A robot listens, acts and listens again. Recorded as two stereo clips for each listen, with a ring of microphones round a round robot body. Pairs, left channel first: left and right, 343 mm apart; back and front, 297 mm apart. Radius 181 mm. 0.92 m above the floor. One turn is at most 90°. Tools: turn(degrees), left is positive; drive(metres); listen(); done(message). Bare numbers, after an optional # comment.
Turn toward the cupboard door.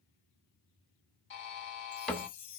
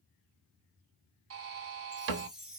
done("Facing the cupboard door, 1 to 2 m away.")